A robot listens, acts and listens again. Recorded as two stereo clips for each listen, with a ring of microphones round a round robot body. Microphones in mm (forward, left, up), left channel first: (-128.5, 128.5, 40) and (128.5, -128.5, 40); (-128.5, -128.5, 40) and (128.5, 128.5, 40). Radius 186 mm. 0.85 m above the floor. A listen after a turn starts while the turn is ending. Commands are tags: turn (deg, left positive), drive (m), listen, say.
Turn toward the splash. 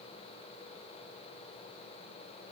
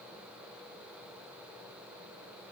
<listen/>
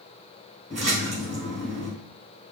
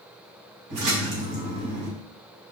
<turn deg="25"/>
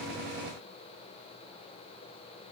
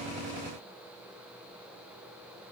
<say>I heard a splash from this way, but can't make it out now.</say>